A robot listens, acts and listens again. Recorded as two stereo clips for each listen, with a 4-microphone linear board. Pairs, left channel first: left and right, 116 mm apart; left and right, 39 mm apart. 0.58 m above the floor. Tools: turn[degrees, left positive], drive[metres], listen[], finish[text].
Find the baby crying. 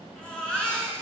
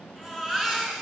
Action: turn[30]
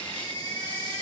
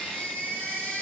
Thought: So it is at 140° left.
Action: turn[140]
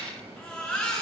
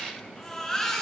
Thought: The baby crying is now 10° left.
Action: turn[10]
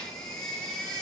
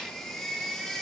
Thought: The baby crying is now 10° left.
Action: turn[10]
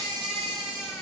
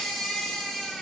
Action: finish[Facing the baby crying.]